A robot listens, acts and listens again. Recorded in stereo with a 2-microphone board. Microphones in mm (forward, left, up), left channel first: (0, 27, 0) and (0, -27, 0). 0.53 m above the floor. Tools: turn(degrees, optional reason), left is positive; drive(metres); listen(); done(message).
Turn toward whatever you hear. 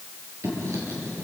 turn(degrees=-65, reason="The writing: about 65° right or 115° right.")
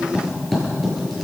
done("Facing the writing.")